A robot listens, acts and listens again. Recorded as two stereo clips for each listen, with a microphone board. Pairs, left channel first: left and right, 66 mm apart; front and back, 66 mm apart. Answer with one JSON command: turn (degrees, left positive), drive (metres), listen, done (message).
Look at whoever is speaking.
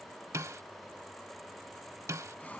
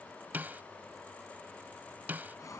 {"listen": true}
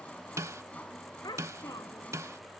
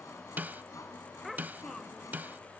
{"turn": 90}
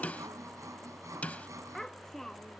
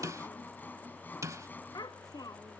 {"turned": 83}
{"done": "Facing the child speaking."}